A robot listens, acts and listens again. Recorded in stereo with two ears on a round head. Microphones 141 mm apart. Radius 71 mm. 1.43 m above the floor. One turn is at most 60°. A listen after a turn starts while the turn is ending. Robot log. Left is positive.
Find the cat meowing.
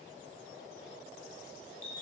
cmd idle
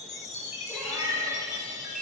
cmd yaw +30
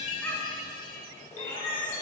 note: So it is at 150° left.
cmd yaw +60
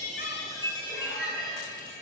note: The cat meowing is now 100° left.
cmd yaw +60
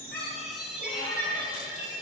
note: The cat meowing is now 50° left.
cmd yaw +50
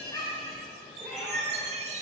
end: Facing the cat meowing.